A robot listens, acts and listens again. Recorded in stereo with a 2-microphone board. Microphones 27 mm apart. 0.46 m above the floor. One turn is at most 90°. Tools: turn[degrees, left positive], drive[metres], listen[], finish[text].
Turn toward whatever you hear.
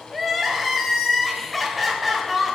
Action: turn[30]
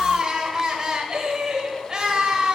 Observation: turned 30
Thought: So it is at 30° right.
Action: turn[-30]
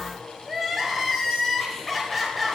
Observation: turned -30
Action: finish[Facing the crying.]